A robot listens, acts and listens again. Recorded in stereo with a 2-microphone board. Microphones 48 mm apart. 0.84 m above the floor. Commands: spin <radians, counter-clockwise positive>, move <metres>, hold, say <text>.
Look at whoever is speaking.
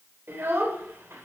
spin -1.22
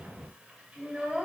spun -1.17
spin -0.44
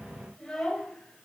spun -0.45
spin 0.17
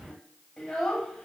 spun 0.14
spin 0.17
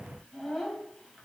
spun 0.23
say Found it: a child speaking, straight ahead.